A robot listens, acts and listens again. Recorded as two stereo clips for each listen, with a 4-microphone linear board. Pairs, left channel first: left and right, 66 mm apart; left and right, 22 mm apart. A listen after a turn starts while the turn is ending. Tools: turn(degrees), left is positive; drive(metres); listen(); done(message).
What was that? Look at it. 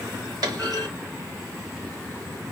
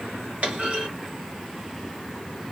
turn(degrees=-90)
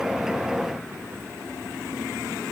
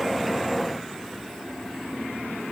done("I heard a clunk from this way, but can't make it out now.")